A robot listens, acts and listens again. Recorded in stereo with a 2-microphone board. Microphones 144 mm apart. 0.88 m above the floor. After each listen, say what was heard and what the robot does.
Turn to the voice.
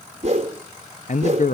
The man speaking: about 60° left or 120° left. Turn 60° left.
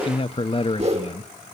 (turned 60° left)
So it is at 45° left. Turn 45° left.
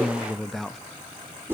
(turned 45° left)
Found it: a man speaking, straight ahead.